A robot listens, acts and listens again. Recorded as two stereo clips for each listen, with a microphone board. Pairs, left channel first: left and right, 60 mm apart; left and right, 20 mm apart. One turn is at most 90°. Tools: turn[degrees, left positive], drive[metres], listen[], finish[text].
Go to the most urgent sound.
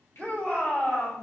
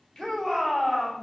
Action: turn[30]
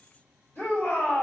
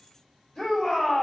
Thought: So it is at 140° left.
Action: turn[90]
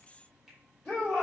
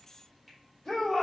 Thought: The shout is now 35° left.
Action: turn[35]
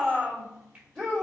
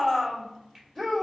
Thought: The shout is now 20° left.
Action: turn[20]
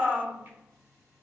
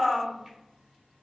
Action: drive[1.0]
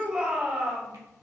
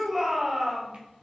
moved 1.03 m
Action: drive[1.0]
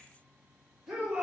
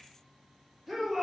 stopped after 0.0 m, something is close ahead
Action: finish[I am next to the shout.]